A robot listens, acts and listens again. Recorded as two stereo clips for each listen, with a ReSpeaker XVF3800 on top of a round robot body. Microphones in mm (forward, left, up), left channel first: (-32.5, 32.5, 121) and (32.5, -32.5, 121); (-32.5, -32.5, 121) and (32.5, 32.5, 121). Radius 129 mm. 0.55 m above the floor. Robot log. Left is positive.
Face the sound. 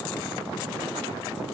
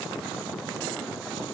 cmd idle
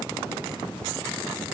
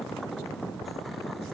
cmd idle
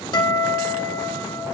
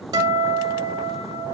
note: The guitar: 95° left.
cmd yaw +95
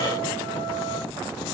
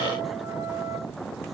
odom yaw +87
cmd idle
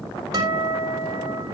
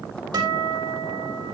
end: Facing the guitar, over 4 m away.